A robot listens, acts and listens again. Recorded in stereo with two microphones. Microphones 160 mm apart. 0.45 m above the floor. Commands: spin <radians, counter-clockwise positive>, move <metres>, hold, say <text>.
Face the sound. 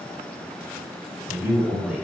spin -0.52
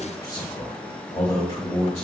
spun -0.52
spin 0.79
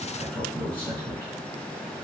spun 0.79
spin 0.17
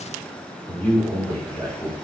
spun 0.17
spin 0.17
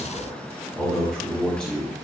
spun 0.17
say Facing the man speaking, 2 to 4 m away.